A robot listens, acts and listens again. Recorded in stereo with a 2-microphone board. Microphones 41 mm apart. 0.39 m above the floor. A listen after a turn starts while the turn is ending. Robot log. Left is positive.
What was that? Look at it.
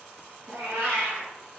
note: The cat meowing: about 55° right or 125° right.
cmd yaw -55
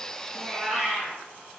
end: Facing the cat meowing.